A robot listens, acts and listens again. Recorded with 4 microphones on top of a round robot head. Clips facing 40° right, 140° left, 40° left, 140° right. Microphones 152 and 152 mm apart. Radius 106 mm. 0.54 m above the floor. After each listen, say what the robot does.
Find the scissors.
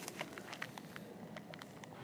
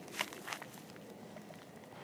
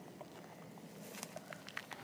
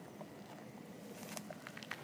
Keep listening.
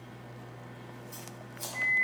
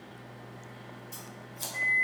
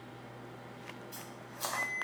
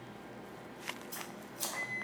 Turn 160° right.
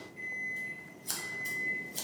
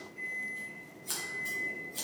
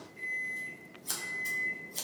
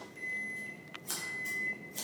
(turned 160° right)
Facing the scissors, 1 to 2 m away.